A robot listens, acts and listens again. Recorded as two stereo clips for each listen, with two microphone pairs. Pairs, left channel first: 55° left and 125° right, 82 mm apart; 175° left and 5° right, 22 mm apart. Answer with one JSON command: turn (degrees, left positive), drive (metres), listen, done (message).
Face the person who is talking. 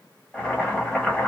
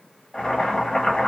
{"listen": true}
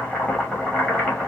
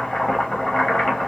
{"listen": true}
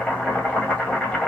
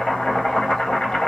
{"done": "I can't make out anyone speaking, only boiling."}